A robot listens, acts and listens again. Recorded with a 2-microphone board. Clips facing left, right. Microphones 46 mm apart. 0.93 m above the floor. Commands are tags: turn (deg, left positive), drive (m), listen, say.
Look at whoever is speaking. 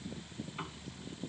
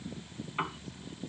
<listen/>
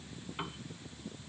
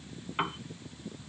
<listen/>
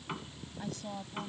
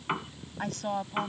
<turn deg="-65"/>
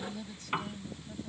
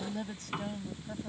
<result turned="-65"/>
<turn deg="-50"/>
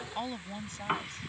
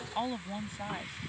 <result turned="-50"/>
<turn deg="-10"/>
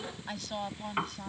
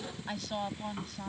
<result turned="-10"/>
<say>Facing the woman speaking.</say>